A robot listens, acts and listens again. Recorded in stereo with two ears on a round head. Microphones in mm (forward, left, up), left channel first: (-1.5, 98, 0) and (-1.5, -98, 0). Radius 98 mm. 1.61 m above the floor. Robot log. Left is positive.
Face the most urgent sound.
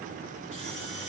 cmd idle
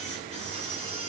cmd idle
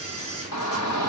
cmd yaw +90
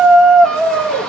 end: Facing the shout.